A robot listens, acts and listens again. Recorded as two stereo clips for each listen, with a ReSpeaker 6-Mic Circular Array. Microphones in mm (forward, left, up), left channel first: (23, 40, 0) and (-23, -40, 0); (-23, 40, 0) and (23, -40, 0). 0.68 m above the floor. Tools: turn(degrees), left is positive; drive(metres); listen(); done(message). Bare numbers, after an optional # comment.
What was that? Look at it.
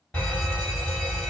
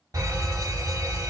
# The fire alarm: 20° right.
turn(-20)
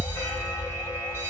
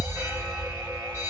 done("Facing the fire alarm, 2 to 4 m away.")